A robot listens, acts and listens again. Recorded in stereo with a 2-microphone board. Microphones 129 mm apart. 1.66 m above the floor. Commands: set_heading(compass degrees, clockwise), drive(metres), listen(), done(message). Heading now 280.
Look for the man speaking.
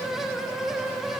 listen()
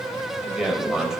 set_heading(310)
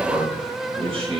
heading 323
set_heading(98)
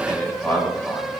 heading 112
set_heading(97)
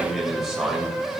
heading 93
done("Facing the man speaking.")